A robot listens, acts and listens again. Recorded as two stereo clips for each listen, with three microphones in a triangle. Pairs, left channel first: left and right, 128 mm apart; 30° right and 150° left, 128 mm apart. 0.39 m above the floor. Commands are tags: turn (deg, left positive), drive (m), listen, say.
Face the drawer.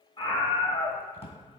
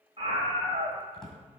<turn deg="55"/>
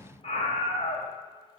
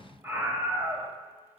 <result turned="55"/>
<listen/>
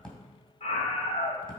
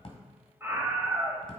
<say>Facing the drawer.</say>